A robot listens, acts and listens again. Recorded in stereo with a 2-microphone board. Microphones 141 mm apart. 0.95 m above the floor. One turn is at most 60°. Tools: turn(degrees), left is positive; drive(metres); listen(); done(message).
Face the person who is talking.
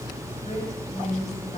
turn(degrees=50)
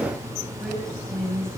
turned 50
done("Found it: a woman speaking, straight ahead, over 4 m away.")